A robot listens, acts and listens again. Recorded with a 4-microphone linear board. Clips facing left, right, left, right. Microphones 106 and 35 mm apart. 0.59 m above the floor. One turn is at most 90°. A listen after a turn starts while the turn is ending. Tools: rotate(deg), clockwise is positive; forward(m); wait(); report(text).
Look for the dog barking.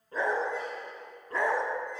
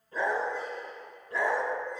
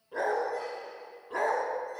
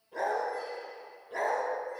rotate(-50)
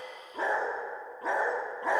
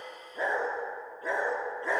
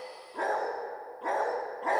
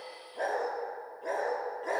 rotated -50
rotate(-60)
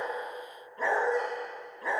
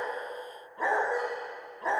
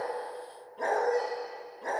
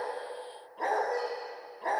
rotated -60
rotate(30)
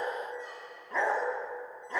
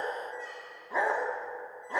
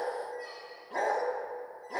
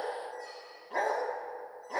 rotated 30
rotate(15)
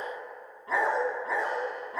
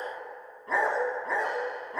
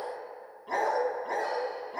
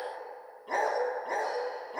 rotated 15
report("Facing the dog barking, 1 to 2 m away.")